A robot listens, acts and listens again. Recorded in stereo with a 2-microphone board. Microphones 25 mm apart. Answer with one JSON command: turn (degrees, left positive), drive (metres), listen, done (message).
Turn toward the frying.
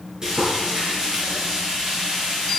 {"turn": -25}
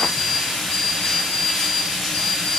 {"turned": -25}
{"done": "Found it: frying, straight ahead, over 4 m away."}